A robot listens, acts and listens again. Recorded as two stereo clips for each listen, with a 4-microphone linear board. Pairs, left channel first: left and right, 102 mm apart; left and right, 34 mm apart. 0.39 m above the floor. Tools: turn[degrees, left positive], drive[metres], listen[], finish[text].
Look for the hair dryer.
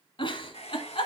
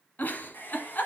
Thought: The hair dryer: about 70° left or 110° left.
Action: turn[70]
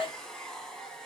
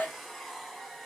Action: finish[Facing the hair dryer.]